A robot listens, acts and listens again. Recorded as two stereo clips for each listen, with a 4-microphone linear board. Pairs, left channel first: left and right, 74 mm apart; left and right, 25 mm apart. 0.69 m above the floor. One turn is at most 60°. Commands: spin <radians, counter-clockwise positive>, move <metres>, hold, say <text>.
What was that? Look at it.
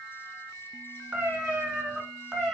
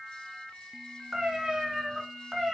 spin 0.52
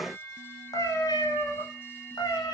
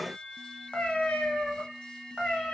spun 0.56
spin 1.05
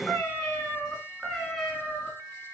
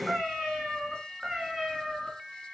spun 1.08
say Found it: a cat meowing, straight ahead.